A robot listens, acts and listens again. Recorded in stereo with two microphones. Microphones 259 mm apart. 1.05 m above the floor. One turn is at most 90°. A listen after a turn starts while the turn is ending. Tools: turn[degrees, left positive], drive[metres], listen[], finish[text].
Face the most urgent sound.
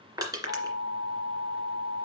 Thought: The alarm: about 55° right or 125° right.
Action: turn[-55]
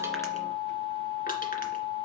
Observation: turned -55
Action: finish[Facing the alarm, 2 to 4 m away.]